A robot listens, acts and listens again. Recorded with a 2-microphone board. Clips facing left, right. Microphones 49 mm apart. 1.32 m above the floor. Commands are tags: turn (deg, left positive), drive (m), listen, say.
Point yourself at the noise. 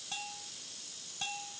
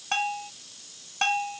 <turn deg="-60"/>
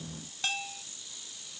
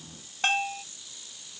<turn deg="-45"/>
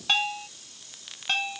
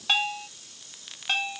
<say>Found it: a bell, straight ahead.</say>